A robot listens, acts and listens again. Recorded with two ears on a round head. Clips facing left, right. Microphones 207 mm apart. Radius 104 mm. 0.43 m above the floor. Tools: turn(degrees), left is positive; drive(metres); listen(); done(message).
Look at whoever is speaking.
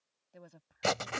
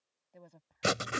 turn(degrees=30)
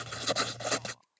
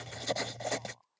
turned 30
listen()
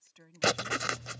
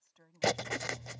turn(degrees=135)
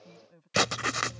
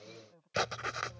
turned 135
turn(degrees=35)
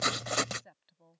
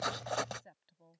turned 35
done("Facing the woman speaking.")